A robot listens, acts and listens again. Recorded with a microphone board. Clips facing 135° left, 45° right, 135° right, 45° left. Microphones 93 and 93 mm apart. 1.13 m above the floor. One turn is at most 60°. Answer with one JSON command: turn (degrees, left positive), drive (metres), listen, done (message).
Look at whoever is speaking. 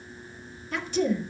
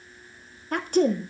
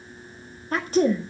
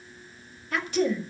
{"turn": -60}
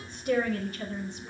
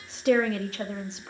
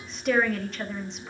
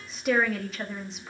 {"turn": -40}
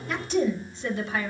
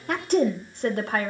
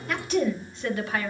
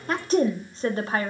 {"turn": -10}
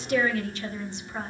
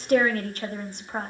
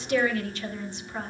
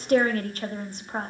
{"done": "Facing the woman speaking."}